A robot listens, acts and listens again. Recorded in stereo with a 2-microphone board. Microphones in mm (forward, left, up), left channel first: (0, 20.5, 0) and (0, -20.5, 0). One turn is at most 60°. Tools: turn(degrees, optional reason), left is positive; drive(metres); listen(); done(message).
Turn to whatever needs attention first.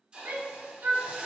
turn(degrees=-60, reason="The shout: about 60° right or 120° right.")
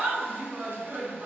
turn(degrees=-50, reason="So it is at 50° right.")
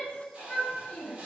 turn(degrees=15, reason="The shout is now 15° left.")
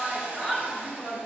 done("Facing the shout, 1 to 2 m away.")